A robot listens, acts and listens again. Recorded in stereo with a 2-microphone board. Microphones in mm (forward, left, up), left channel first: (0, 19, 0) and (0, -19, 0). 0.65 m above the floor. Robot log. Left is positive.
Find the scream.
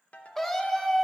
cmd yaw +30
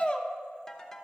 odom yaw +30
note: So it is at 145° left.
cmd yaw +145
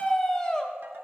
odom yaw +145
note: The scream is now 25° left.
cmd yaw +25
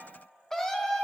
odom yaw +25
note: The scream is now 15° left.
cmd yaw +15
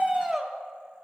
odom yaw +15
end: Found it: a scream, straight ahead, under 1 m away.